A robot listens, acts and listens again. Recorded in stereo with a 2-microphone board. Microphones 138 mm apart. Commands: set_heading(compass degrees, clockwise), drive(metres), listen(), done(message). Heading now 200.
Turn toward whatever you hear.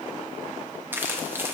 set_heading(215)
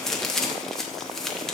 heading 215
done("Facing the crumpling, under 1 m away.")